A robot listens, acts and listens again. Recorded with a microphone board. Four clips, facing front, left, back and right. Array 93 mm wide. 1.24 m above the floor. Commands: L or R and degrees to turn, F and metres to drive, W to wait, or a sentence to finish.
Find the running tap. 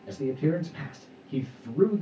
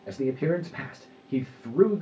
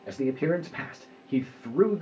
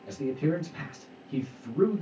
W
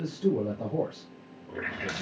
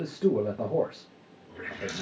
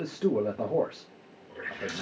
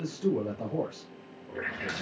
R35
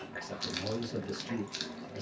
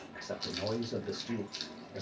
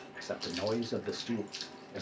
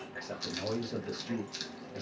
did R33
Found it: a running tap, straight ahead.